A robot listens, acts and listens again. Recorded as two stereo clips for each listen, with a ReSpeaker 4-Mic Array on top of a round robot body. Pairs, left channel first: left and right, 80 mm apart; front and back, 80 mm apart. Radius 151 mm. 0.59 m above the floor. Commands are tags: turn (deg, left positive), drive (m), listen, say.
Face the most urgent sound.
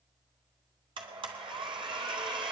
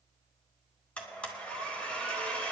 <listen/>
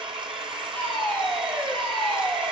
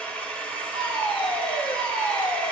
<turn deg="10"/>
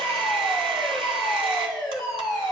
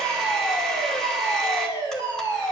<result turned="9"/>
<say>Found it: a fire alarm, straight ahead.</say>